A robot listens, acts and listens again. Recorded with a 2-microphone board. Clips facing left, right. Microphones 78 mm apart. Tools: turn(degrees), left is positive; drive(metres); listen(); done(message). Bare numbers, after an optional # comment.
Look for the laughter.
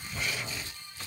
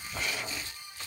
listen()
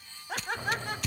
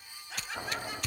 # The laughter: about 60° left or 120° left.
turn(60)
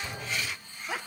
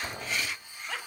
# So it is at 15° left.
turn(15)
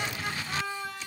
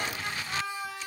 done("Facing the laughter, 2 to 4 m away.")